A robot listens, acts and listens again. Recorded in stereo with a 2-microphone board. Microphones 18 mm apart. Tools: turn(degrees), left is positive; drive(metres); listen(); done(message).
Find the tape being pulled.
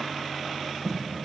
turn(degrees=20)
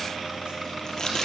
turn(degrees=140)
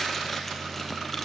listen()
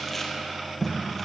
turn(degrees=10)
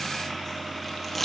done("Found it: tape being pulled, straight ahead.")